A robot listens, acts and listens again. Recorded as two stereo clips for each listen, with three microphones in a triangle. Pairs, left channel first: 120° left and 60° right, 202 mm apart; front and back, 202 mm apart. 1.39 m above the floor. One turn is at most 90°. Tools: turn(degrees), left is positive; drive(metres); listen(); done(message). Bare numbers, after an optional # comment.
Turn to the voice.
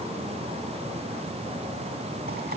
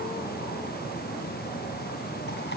listen()
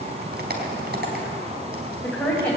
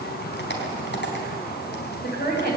# The woman speaking: 35° left.
turn(35)
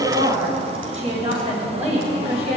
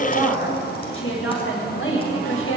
done("Found it: a woman speaking, straight ahead.")